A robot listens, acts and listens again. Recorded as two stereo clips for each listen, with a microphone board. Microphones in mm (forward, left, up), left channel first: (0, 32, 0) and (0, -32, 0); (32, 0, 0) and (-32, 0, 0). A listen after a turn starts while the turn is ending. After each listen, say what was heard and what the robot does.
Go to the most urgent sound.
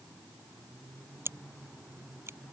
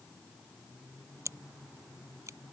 Keep listening.
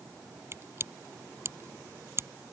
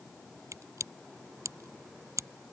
Keep listening.
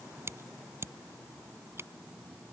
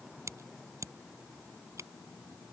I can't make out anything urgent, only scissors.